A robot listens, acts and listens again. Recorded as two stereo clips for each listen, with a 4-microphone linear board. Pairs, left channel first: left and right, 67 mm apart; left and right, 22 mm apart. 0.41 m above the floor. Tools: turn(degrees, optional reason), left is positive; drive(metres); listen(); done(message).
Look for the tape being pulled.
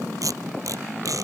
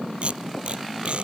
turn(degrees=-55, reason="The tape being pulled: about 55° right or 125° right.")
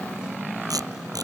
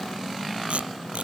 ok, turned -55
turn(degrees=-70, reason="So it is at 70° right.")
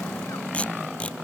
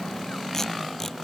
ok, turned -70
turn(degrees=20, reason="The tape being pulled is now 20° left.")
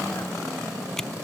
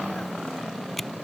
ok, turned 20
done("Found it: tape being pulled, straight ahead.")